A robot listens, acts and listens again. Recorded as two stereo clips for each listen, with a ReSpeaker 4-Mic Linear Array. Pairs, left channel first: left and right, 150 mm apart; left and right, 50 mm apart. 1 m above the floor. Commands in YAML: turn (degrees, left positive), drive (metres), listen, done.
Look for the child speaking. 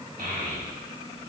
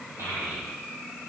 turn: -70
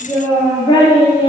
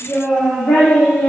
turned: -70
turn: 35
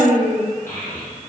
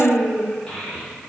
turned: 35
turn: 15
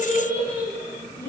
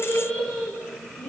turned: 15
turn: 15
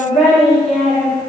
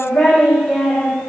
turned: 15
done: "Found it: a child speaking, straight ahead."